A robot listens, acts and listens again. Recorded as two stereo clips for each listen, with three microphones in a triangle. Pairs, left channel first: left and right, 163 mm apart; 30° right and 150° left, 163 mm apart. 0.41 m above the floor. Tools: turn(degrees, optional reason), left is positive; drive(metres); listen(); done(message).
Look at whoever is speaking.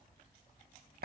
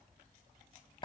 listen()
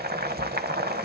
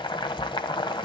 listen()
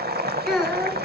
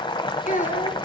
done("Found it: a child speaking, straight ahead, 2 to 4 m away.")